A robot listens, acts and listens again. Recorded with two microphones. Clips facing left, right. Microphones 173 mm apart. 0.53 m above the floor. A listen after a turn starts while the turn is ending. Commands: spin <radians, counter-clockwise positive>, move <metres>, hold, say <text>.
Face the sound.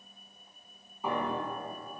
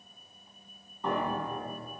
spin 0.52
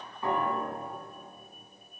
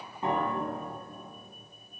spin -0.44
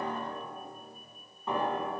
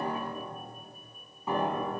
say Facing the piano.